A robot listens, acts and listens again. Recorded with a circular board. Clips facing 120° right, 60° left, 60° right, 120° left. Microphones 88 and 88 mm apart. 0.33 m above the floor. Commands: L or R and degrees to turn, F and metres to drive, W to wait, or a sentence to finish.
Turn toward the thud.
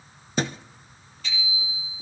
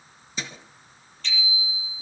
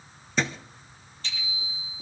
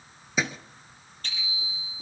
R155
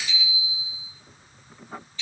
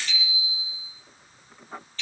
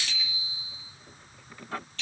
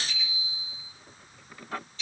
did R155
Facing where the thud came from. I can't hear it now.